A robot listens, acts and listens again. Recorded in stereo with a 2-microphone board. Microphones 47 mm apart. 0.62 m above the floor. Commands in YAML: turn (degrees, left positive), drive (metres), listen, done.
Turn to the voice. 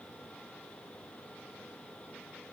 listen: true
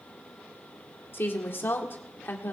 turn: 50
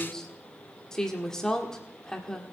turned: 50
turn: 15
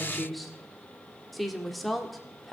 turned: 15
done: "Found it: a woman speaking, straight ahead, 1 to 2 m away."